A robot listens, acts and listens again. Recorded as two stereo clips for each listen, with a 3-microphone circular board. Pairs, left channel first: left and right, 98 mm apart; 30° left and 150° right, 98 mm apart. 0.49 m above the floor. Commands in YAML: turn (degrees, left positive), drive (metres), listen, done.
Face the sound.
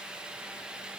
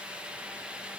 listen: true
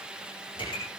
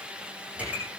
turn: 130
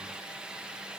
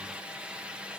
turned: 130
done: "I heard a pop from this way, but can't make it out now."